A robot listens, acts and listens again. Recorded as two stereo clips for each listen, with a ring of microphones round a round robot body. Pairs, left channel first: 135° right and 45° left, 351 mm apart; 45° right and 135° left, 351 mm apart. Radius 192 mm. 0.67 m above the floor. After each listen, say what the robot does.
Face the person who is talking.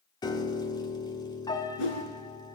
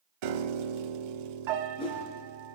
Keep listening.
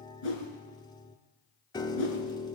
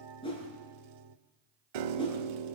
Keep listening.
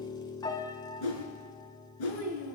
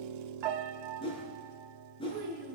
Turn 160° right.
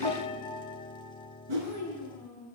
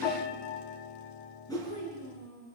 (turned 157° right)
Facing the child speaking.